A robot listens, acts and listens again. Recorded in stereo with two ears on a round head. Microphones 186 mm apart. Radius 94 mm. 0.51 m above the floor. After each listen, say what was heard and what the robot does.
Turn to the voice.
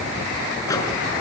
Keep listening.
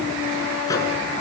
Keep listening.
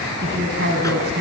The woman speaking: about 50° right or 130° right. Turn 50° right.
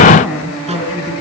Facing the woman speaking.